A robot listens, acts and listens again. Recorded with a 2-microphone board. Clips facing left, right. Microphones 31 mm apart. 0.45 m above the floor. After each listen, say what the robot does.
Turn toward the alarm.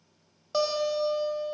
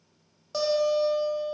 Keep listening.
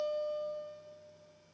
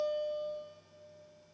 Keep listening.
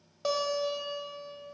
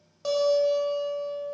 I can't make out an alarm, only a guitar.